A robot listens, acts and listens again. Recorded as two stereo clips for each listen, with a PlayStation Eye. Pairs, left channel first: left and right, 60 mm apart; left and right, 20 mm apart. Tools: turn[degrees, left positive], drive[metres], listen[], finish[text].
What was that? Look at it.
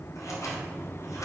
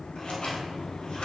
Thought: The scissors: about 55° left or 125° left.
Action: turn[55]
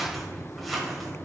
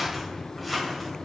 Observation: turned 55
Action: finish[Found it: scissors, straight ahead.]